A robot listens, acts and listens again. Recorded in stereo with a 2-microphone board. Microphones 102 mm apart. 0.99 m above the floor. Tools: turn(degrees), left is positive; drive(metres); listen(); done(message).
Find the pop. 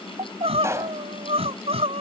turn(degrees=-30)
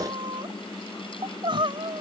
listen()
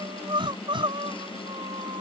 done("I heard a pop, but can't make it out now. It was about straight ahead or 120° right.")